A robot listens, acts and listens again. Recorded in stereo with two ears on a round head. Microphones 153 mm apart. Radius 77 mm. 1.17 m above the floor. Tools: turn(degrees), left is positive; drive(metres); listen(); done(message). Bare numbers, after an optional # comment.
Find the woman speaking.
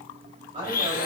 # The woman speaking: about 25° right or 155° right.
turn(-25)
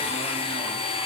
listen()
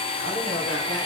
listen()
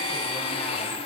done("I heard a woman speaking, but can't make it out now. It was about straight ahead or 130° right.")